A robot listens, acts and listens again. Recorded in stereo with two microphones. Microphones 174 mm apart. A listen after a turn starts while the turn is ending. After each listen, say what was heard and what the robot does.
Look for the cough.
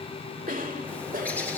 The cough: about 50° right or 130° right. Turn 50° right.
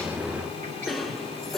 Found it: a cough, straight ahead, 2 to 4 m away.